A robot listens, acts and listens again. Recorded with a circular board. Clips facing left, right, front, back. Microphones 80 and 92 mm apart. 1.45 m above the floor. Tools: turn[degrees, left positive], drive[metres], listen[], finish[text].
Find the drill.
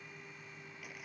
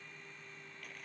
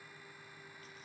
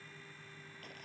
Action: listen[]
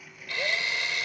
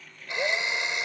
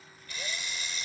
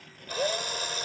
Thought: The drill: 160° right.
Action: turn[-160]
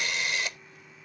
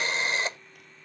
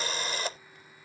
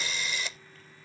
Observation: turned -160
Thought: The drill is now 35° right.
Action: turn[-35]
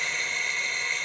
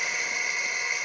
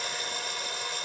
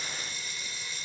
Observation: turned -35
Thought: The drill is now 10° right.
Action: turn[-10]
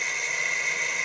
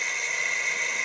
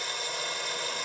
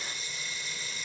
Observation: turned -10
Action: finish[Found it: a drill, straight ahead.]